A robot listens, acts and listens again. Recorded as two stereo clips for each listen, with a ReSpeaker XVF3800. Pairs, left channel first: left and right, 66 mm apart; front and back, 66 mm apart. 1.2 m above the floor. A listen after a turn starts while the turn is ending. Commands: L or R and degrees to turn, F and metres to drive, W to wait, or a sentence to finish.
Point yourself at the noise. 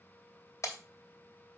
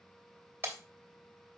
L125
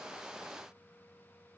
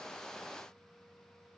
Facing where the breaking glass came from. I can't hear it now.